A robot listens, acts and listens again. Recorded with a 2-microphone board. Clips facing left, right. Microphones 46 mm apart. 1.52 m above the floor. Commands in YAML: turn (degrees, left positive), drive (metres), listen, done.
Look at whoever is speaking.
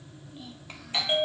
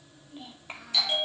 turn: -20
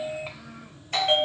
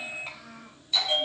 done: "Found it: a child speaking, straight ahead, over 4 m away."